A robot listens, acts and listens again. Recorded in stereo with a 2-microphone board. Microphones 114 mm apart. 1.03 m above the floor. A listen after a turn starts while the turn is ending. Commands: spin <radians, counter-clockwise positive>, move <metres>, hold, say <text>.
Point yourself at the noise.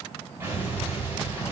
spin -0.35
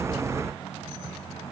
hold
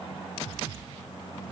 say I heard an explosion, but can't make it out now. It was about straight ahead or 140° right.